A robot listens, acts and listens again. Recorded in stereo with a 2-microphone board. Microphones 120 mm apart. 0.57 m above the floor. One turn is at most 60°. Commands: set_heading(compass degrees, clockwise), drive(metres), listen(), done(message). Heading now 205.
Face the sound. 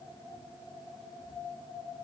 listen()
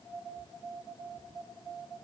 listen()
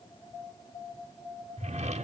set_heading(265)
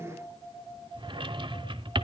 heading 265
set_heading(310)
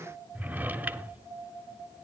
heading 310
set_heading(325)
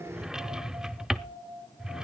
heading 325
done("Found it: a drawer, straight ahead.")